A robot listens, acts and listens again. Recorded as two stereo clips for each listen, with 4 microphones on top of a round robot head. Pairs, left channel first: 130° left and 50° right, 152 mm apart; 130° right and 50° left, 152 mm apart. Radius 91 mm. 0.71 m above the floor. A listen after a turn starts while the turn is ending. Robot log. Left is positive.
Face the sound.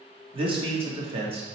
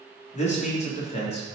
note: The man speaking: 90° right.
cmd yaw -90
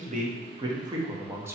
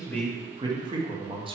note: The man speaking is now 15° left.
cmd yaw +15
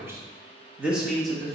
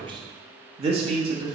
note: The man speaking is now 45° left.
cmd yaw +45
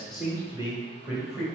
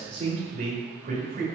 note: The man speaking is now 30° left.
cmd yaw +30
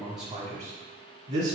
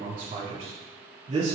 end: Found it: a man speaking, straight ahead.